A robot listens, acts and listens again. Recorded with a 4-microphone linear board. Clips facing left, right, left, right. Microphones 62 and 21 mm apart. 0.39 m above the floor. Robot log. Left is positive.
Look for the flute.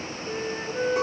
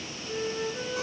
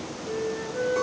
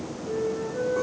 note: The flute: about 50° left or 130° left.
cmd yaw +50
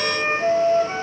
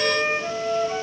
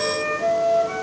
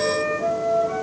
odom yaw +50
note: So it is at 80° left.
cmd yaw +80
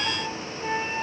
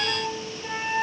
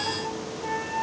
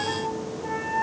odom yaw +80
note: The flute is now 30° left.
cmd yaw +30
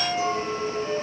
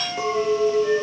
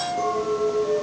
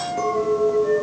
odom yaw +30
note: The flute is now 10° right.
cmd yaw -10
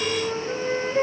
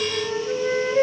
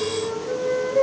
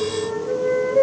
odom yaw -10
end: Facing the flute.